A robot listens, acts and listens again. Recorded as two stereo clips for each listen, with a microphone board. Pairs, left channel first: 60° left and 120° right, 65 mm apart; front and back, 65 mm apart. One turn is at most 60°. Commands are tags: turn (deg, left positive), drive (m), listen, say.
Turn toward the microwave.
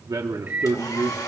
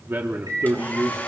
<turn deg="60"/>
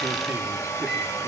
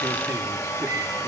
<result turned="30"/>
<turn deg="60"/>
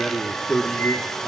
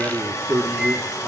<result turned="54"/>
<turn deg="60"/>
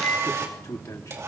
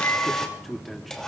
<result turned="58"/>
<turn deg="35"/>
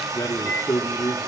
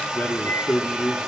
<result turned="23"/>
<turn deg="15"/>
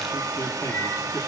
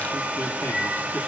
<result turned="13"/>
<listen/>
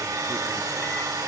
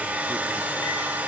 <listen/>
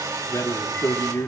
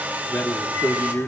<say>I heard a microwave from this way, but can't make it out now.</say>